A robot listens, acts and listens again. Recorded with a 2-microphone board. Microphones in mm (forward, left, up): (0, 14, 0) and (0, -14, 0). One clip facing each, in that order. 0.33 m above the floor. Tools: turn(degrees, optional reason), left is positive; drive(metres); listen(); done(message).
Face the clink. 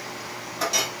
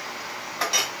turn(degrees=-35, reason="The clink: about 35° right or 145° right.")
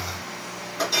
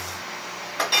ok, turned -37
turn(degrees=-105, reason="So it is at 105° right.")
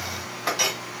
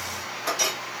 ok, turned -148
turn(degrees=40, reason="The clink is now 40° left.")
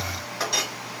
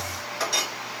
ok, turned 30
turn(degrees=10, reason="The clink is now 10° left.")
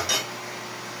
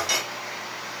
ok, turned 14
done("Facing the clink.")